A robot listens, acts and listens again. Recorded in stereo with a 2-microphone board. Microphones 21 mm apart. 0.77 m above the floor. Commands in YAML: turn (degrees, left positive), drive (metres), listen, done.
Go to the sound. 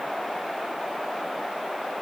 listen: true
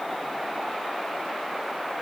listen: true
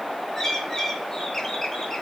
turn: 20
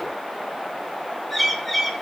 drive: 1.0
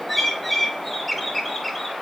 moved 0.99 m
drive: 1.0
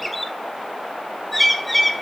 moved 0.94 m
drive: 1.0
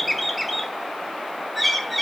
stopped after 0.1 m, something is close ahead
done: "I am next to the bird."